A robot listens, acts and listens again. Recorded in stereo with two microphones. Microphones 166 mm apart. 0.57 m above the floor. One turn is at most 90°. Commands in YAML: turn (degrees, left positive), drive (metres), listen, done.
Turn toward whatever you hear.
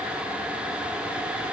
listen: true
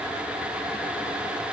listen: true
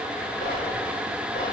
turn: 55
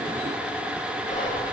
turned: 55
turn: 55
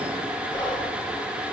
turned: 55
turn: 30
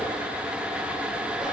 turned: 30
listen: true
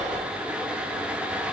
done: "Found it: whispering, straight ahead."